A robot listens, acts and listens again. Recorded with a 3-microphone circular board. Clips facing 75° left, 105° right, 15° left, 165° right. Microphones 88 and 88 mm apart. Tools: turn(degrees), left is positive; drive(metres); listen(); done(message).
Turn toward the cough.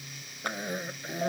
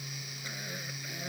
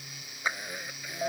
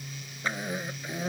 turn(degrees=125)
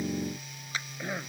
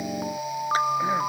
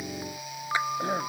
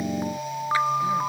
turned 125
listen()
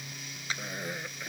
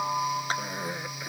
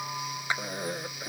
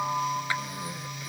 turn(degrees=-25)
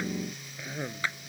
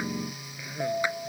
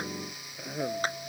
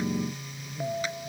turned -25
done("Found it: a cough, straight ahead.")